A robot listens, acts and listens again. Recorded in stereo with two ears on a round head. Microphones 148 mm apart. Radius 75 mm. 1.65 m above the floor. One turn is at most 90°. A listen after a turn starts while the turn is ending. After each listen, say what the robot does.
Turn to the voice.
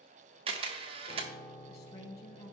Turn 40° left.
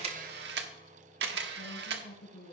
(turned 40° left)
Turn 90° left.
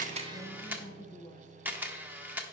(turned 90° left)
Found it: a woman speaking, straight ahead.